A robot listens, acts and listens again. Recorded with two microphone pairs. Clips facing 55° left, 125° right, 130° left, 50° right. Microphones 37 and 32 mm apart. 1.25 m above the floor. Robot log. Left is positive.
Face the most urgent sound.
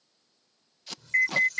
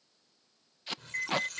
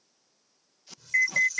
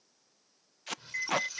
note: The alarm: 80° left.
cmd yaw +80
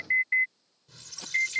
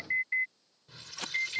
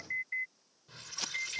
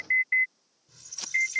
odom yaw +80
end: Found it: an alarm, straight ahead.